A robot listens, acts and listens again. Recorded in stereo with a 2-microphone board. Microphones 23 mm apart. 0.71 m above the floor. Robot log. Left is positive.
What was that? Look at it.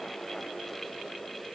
cmd idle
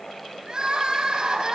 note: The crying: about 30° right or 150° right.
cmd yaw -30
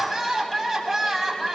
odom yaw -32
end: Found it: crying, straight ahead, over 4 m away.